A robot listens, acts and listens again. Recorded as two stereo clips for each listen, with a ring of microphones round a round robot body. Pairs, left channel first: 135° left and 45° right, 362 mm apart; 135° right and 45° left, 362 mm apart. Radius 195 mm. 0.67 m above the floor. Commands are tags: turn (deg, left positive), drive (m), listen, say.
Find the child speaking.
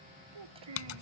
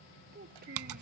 <turn deg="-20"/>
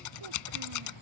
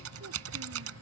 <listen/>
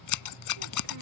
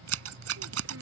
<listen/>
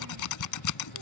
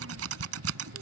<say>Facing where the child speaking came from. I can't hear it now.</say>